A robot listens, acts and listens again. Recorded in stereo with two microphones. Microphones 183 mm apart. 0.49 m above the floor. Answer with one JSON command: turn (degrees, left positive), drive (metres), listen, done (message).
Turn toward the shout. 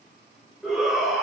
{"turn": 30}
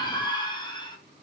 {"turn": 150}
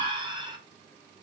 {"turn": -30}
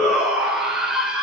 {"done": "Found it: a shout, straight ahead, 1 to 2 m away."}